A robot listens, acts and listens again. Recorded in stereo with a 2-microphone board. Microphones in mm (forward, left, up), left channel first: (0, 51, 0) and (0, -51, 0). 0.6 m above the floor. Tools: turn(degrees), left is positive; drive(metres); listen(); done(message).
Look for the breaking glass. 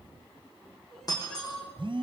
turn(degrees=40)
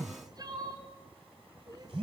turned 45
listen()
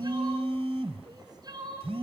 done("I heard breaking glass, but can't make it out now. It was about 5° right or 95° left.")